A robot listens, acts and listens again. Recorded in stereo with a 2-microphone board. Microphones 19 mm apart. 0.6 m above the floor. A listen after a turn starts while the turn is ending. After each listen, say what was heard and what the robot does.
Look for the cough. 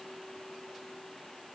Keep listening.
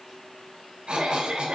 The cough: about 55° right or 125° right. Turn 55° right.
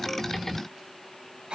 So it is at 60° right. Turn 60° right.
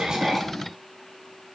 Keep listening.
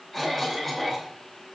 Found it: a cough, straight ahead.